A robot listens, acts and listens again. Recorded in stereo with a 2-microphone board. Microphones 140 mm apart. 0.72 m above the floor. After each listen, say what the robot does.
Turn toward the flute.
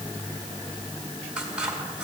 Keep listening.
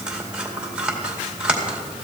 Keep listening.
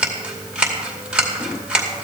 I can't make out a flute, only scissors.